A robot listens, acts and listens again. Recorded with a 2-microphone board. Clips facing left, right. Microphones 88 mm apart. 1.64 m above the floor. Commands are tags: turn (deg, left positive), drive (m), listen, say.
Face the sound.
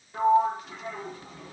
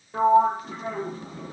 <turn deg="-30"/>
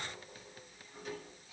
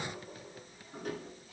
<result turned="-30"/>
<turn deg="-110"/>
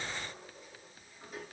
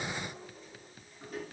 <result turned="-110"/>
<listen/>
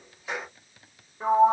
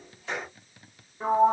<say>Facing the sliding door.</say>